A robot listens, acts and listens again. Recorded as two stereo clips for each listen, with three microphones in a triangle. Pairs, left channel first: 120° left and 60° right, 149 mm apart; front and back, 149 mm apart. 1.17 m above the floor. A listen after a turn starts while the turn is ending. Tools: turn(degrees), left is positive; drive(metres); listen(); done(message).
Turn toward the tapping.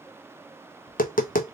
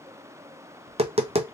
turn(degrees=135)
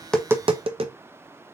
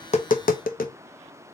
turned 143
done("Facing the tapping.")